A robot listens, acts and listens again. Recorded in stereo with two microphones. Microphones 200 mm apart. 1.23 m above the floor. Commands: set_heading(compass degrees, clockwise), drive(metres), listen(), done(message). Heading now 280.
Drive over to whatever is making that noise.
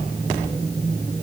listen()
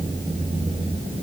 listen()
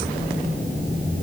done("I can't make out anything.")